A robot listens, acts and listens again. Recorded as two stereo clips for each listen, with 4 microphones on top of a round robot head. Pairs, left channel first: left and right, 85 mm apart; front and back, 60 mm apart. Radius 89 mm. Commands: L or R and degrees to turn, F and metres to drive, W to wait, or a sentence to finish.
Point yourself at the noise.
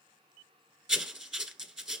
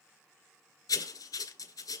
R10
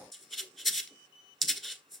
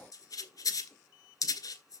Found it: writing, straight ahead.